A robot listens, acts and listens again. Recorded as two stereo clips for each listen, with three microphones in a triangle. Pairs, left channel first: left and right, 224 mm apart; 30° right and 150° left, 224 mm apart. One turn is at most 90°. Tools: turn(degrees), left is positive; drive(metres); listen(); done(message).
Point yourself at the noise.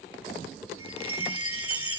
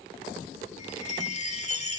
turn(degrees=-90)
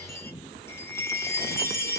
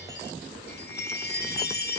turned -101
turn(degrees=10)
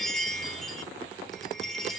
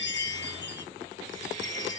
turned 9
done("Found it: a chime, straight ahead.")